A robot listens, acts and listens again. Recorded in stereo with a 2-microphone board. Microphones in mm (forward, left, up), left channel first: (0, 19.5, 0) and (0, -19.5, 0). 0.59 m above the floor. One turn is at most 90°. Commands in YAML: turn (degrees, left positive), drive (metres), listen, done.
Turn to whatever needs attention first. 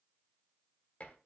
listen: true
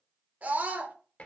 turn: -45
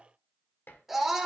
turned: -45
done: "Found it: a scream, straight ahead, 1 to 2 m away."